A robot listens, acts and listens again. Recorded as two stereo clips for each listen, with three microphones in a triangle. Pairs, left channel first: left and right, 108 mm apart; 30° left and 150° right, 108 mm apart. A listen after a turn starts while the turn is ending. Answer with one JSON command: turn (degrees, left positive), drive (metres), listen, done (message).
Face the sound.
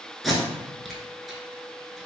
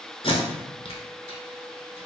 {"done": "Facing the tape being pulled."}